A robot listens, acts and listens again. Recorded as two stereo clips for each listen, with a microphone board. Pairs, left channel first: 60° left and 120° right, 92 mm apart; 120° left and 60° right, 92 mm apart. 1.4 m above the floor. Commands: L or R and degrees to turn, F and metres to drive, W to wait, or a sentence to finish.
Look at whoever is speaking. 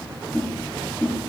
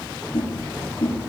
W
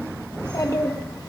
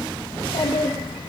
L105
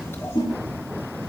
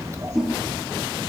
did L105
Found it: a child speaking, straight ahead.